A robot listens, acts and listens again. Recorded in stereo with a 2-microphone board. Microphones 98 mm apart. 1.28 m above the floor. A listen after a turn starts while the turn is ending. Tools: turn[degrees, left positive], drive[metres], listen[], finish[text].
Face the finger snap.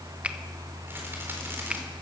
Action: turn[-30]
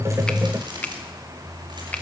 Thought: So it is at 15° left.
Action: turn[15]
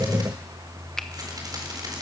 Action: listen[]
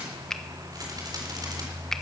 Action: finish[Found it: a finger snap, straight ahead.]